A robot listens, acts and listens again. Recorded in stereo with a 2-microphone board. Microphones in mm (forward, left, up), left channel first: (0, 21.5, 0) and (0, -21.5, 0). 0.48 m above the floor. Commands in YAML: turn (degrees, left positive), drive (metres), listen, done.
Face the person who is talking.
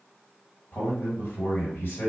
turn: 65
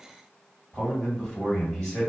turn: 20
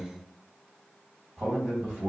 done: "Facing the man speaking, 1 to 2 m away."